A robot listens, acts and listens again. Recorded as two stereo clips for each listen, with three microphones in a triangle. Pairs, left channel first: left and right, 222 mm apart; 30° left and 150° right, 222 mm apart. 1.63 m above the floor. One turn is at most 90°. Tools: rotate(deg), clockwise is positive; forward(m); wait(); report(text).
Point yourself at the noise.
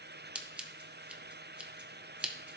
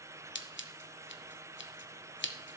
report("Found it: scissors, straight ahead.")